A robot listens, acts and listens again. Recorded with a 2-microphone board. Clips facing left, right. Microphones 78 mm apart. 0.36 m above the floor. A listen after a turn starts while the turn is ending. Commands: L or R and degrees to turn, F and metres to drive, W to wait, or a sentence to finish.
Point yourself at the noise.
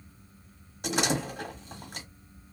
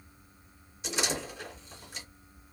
L60
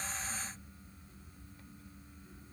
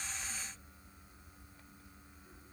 W
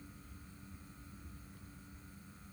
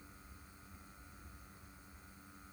I heard a door slam, but can't make it out now. It was about straight ahead or 60° left.